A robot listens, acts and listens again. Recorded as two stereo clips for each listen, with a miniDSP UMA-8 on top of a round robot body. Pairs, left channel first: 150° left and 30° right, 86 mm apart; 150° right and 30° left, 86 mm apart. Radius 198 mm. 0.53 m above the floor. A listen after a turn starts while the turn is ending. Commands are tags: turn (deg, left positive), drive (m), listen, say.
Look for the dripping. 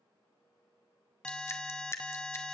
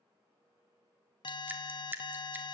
<turn deg="95"/>
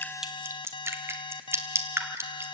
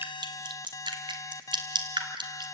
<turn deg="25"/>
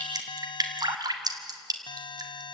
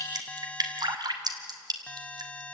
<say>Facing the dripping, 1 to 2 m away.</say>